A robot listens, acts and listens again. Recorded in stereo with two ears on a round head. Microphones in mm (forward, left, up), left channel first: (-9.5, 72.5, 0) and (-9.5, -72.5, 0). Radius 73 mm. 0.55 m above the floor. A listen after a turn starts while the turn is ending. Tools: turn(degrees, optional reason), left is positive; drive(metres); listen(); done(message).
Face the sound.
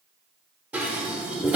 turn(degrees=-30)
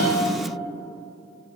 listen()
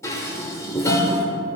turn(degrees=20, reason="So it is at 20° left.")
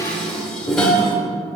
done("Facing the dishes clattering.")